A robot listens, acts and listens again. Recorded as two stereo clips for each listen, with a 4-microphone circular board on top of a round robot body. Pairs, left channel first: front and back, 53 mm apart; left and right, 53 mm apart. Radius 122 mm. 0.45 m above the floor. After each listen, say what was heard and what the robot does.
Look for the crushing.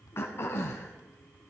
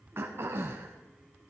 Keep listening.
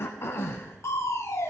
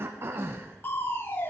The crushing: 35° left. Turn 35° left.
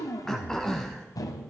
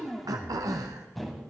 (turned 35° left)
Facing the crushing.